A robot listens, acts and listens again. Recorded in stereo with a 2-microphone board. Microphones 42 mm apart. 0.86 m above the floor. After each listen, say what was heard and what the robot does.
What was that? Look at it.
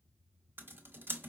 The typing on a keyboard: about 55° right or 125° right. Turn 55° right.
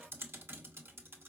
So it is at 70° right. Turn 70° right.
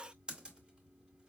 The typing on a keyboard is now 20° right. Turn 20° right.
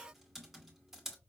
Found it: typing on a keyboard, straight ahead, under 1 m away.